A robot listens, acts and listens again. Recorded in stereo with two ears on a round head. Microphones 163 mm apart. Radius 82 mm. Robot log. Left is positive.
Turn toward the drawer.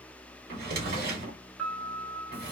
note: The drawer: about 55° right or 125° right.
cmd yaw -55
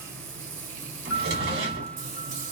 note: So it is at 65° right.
cmd yaw -65
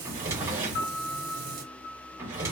note: The drawer is now 15° right.
cmd yaw -15
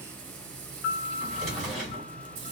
end: Found it: a drawer, straight ahead, 1 to 2 m away.